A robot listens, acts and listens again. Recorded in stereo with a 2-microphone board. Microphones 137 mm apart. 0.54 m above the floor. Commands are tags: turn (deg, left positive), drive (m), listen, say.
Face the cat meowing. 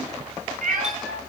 <turn deg="-75"/>
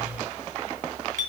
<listen/>
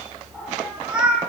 <say>Facing the cat meowing, 2 to 4 m away.</say>